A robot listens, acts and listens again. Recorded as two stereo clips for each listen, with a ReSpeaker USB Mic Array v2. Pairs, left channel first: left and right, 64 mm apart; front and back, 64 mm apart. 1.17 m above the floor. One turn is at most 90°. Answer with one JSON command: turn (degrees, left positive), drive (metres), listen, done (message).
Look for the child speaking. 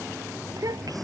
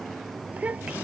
{"turn": -90}
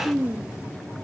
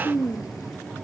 {"turn": -20}
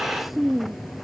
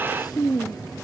{"done": "Facing the child speaking."}